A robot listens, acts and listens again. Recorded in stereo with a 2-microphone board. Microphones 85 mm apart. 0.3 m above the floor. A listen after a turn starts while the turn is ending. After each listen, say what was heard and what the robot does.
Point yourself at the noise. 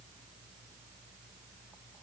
Keep listening.
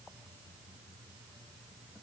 Keep listening.
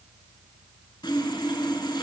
The sawing: about 65° left or 115° left. Turn 65° left.
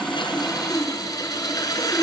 So it is at 50° left. Turn 50° left.
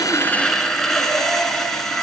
Facing the sawing.